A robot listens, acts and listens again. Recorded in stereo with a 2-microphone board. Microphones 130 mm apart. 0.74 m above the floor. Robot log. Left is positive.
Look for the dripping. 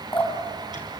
note: The dripping: about 40° left or 140° left.
cmd yaw +40
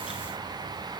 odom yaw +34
cmd idle
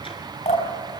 note: So it is at 110° left.
cmd yaw +110
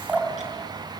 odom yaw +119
note: The dripping is now 10° right.
cmd yaw -10
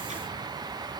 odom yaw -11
cmd idle
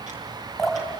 end: Facing the dripping.